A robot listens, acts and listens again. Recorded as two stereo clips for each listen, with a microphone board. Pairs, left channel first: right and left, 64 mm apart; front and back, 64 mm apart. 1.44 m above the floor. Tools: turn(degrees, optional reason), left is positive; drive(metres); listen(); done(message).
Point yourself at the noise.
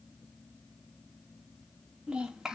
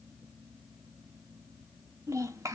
turn(degrees=175, reason="The child speaking: 175° left.")
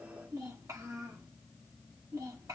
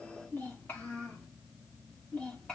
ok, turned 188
turn(degrees=70, reason="The child speaking is now 70° left.")
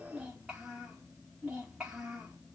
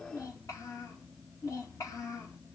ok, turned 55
turn(degrees=15, reason="The child speaking is now 15° left.")
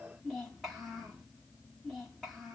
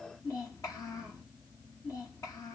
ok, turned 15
done("Facing the child speaking.")